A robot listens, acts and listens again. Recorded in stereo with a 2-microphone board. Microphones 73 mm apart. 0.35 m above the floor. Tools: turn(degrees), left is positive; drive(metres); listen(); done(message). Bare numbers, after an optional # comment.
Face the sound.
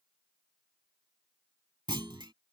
turn(-90)
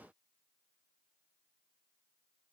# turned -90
done("I heard a clunk from this way, but can't make it out now.")